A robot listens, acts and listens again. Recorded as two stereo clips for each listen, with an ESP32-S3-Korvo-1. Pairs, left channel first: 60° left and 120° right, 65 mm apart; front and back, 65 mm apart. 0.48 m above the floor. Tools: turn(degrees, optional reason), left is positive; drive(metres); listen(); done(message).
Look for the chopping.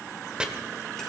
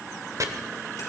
turn(degrees=165, reason="The chopping: 165° left.")
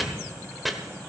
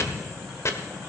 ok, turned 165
turn(degrees=-30, reason="The chopping is now 30° right.")
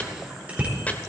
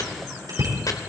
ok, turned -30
listen()
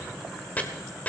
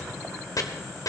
done("Facing the chopping.")